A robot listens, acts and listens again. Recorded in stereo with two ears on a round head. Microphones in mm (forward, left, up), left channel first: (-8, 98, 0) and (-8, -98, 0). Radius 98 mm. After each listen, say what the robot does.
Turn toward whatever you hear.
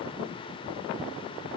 Keep listening.
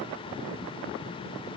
Keep listening.
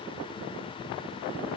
I can't make out anything to turn to.